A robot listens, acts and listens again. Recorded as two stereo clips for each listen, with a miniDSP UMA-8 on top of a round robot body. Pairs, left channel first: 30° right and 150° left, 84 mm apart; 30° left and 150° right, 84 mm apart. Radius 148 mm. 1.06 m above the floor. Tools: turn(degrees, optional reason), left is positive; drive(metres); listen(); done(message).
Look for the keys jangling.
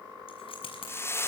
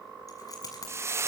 turn(degrees=-20, reason="The keys jangling: 20° right.")
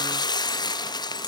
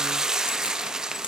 listen()
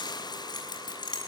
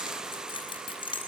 done("Found it: keys jangling, straight ahead.")